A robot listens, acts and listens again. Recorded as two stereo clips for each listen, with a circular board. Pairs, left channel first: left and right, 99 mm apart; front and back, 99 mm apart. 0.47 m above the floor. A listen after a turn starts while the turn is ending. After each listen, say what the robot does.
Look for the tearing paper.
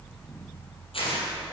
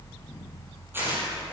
Turn 110° left.
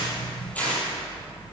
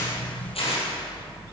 Turn 15° left.
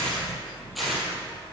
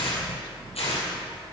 Found it: tearing paper, straight ahead, over 4 m away.